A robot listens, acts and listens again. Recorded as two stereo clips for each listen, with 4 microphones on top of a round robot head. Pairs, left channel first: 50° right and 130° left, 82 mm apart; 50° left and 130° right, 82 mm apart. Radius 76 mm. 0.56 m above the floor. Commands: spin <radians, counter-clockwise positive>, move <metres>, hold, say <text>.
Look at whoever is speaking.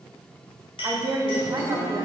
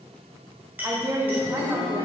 spin 3.14
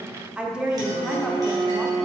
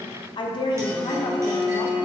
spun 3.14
spin 0.96
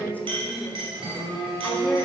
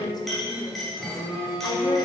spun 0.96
spin 0.35
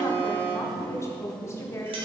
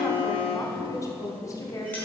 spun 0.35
say Found it: a woman speaking, straight ahead.